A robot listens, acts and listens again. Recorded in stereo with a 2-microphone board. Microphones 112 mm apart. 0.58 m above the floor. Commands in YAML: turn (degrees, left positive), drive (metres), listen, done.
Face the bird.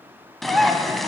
turn: 30
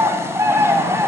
turn: -30
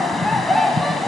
done: "Facing the bird, under 1 m away."